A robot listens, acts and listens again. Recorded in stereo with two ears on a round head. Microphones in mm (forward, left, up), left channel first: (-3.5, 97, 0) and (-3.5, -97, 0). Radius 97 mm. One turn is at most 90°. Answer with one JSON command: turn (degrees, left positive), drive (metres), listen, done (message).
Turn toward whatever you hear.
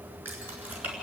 {"turn": -30}
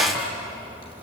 {"turn": 25}
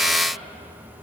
{"listen": true}
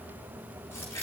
{"turn": 15}
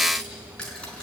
{"done": "Found it: keys jangling, straight ahead, over 4 m away."}